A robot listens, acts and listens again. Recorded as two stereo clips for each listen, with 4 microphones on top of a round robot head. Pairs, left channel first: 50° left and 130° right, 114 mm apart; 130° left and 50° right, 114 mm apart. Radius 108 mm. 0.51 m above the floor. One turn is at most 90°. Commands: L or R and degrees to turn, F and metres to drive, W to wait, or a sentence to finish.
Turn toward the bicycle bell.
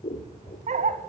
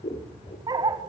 W
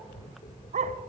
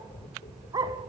W
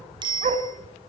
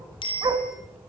L90
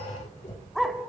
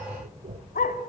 L90
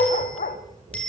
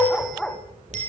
R30
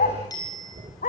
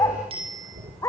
R10
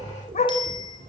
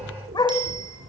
Found it: a bicycle bell, straight ahead.